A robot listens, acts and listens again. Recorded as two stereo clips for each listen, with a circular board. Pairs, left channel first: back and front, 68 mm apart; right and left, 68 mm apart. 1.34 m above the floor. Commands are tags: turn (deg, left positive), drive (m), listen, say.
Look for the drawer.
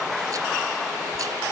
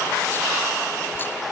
<listen/>
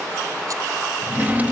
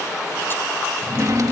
<turn deg="65"/>
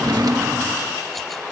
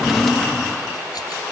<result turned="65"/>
<say>Found it: a drawer, straight ahead.</say>